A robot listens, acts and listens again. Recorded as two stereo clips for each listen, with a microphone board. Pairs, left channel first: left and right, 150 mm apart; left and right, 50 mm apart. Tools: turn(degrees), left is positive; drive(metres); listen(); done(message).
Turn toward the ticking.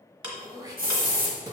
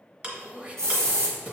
turn(degrees=-30)
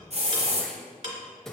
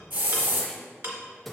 turn(degrees=-115)
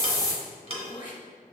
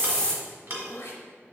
turn(degrees=-45)
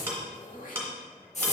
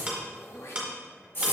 turn(degrees=-20)
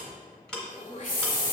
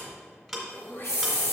done("Facing the ticking, 1 to 2 m away.")